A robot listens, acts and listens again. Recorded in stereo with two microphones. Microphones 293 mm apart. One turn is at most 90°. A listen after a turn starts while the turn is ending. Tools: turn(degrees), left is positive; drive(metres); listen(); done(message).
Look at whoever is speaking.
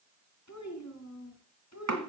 turn(degrees=60)
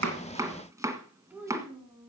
turn(degrees=-10)
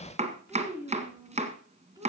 turn(degrees=-15)
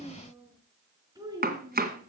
turn(degrees=-10)
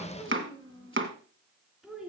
done("Found it: a child speaking, straight ahead, 2 to 4 m away.")